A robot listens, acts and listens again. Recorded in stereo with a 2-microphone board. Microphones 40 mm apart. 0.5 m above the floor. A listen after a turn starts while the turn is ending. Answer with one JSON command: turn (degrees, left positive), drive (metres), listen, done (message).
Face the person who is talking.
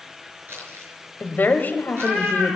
{"turn": 50}
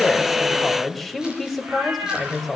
{"done": "Found it: a woman speaking, straight ahead, 2 to 4 m away."}